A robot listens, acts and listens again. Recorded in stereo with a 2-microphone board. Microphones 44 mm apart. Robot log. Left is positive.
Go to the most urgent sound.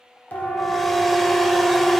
note: The siren: about 50° left or 130° left.
cmd yaw +50
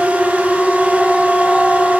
note: So it is at 10° left.
cmd yaw +10
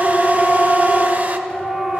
cmd fwd 1.0
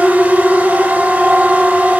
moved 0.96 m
cmd fwd 1.0
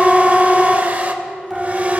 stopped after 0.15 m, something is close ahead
end: Arrived at the siren, straight ahead.